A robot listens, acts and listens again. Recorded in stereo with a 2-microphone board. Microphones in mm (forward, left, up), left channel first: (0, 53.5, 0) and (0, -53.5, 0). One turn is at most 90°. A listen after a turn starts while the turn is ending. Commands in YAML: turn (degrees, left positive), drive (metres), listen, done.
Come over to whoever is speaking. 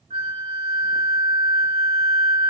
listen: true
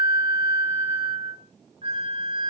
listen: true
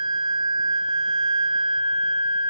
done: "I can't make out anyone speaking to turn to."